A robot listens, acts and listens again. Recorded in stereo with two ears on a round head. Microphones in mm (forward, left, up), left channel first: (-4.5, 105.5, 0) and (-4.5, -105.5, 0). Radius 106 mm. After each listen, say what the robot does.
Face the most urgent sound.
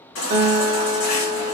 Turn 60° left.
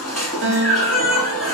Found it: a baby crying, straight ahead, 1 to 2 m away.